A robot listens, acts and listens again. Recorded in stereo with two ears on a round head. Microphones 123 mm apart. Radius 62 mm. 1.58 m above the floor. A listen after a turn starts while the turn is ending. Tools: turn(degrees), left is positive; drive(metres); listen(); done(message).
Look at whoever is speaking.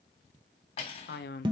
turn(degrees=90)
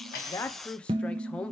turn(degrees=10)
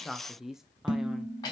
done("Found it: a man speaking, straight ahead, under 1 m away.")